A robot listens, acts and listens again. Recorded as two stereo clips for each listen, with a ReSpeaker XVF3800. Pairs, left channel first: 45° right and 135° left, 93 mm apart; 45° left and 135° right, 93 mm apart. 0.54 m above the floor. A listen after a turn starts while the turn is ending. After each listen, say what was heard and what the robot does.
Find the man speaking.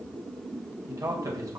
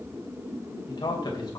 The man speaking: 85° left. Turn 85° left.
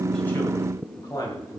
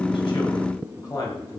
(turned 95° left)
Facing the man speaking, 2 to 4 m away.